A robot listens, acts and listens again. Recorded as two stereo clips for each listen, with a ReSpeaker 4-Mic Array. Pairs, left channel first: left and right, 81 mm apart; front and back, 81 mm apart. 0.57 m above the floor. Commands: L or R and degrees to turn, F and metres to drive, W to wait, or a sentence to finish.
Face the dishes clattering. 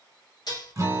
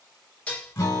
L70
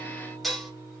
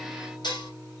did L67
Facing the dishes clattering.